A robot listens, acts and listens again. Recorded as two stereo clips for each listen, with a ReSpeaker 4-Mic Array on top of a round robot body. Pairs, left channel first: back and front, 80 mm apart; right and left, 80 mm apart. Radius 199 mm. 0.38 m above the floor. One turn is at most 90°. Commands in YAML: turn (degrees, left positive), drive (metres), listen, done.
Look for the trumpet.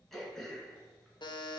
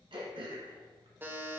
listen: true
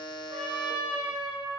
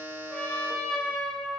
turn: -15
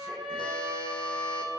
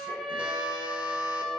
done: "Facing the trumpet."